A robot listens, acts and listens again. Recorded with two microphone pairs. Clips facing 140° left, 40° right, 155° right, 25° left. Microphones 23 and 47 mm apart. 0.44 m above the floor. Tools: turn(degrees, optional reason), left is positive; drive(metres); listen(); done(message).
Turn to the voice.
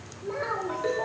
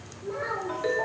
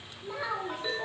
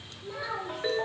turn(degrees=125, reason="The child speaking: 125° left.")
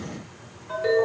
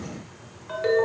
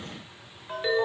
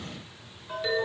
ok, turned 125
listen()
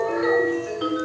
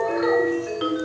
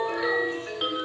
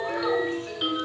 listen()
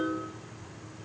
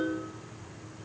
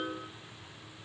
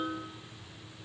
done("Facing where the child speaking came from. I can't hear it now.")